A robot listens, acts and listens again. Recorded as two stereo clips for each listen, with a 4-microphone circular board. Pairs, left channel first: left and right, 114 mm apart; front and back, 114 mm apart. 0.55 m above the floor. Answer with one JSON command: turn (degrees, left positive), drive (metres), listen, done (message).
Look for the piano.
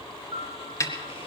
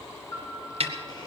{"turn": -50}
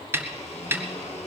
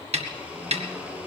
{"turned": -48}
{"listen": true}
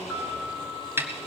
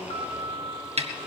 {"done": "Found it: a piano, straight ahead."}